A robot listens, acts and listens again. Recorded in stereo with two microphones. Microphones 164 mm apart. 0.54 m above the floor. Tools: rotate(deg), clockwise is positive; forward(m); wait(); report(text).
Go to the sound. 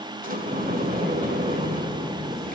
rotate(55)
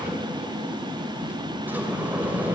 rotate(10)
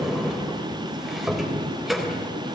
forward(1.0)
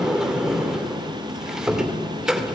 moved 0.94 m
forward(1.0)
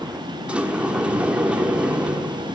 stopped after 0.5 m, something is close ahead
rotate(10)
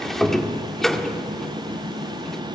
report("I am next to the sliding door.")